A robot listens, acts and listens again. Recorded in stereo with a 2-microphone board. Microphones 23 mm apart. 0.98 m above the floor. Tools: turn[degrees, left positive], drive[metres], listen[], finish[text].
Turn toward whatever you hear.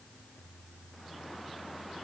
Action: listen[]
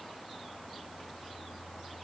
Action: listen[]
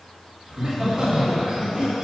Thought: The laughter: about 40° right or 140° right.
Action: turn[-40]
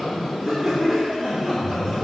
Action: finish[Found it: laughter, straight ahead.]